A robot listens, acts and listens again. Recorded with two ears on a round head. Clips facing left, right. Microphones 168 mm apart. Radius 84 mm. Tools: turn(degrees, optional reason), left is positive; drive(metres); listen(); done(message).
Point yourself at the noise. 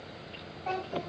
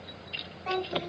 turn(degrees=-40, reason="The child speaking: about 40° right or 140° right.")
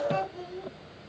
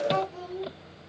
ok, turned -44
turn(degrees=-95, reason="So it is at 95° right.")
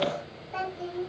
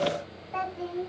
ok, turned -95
turn(degrees=20, reason="The child speaking is now 20° left.")
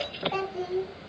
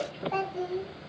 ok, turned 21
done("Found it: a child speaking, straight ahead.")